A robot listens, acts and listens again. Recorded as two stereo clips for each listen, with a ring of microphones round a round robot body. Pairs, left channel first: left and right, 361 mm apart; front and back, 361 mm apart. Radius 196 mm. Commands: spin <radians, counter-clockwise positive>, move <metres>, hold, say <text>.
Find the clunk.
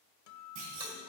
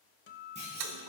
spin -1.83
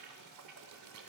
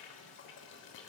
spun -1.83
say I heard a clunk from this way, but can't make it out now.